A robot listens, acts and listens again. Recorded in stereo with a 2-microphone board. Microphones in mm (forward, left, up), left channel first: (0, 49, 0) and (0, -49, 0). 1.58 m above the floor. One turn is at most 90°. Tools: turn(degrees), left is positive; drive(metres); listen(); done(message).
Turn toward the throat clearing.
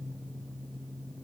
listen()
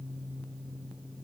listen()
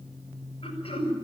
turn(degrees=90)
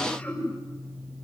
turn(degrees=10)
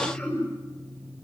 done("Facing the throat clearing.")